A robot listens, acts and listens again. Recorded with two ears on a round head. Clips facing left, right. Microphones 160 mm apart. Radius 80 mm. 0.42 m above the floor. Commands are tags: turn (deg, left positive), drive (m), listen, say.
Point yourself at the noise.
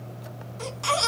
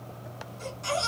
<turn deg="90"/>
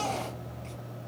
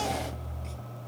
<say>Found it: a baby crying, straight ahead.</say>